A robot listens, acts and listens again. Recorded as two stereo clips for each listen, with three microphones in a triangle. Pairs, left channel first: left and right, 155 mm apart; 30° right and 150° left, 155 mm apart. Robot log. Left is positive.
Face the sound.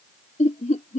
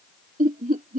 note: The laughter: 125° left.
cmd yaw +125
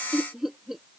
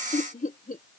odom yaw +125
end: Found it: laughter, straight ahead.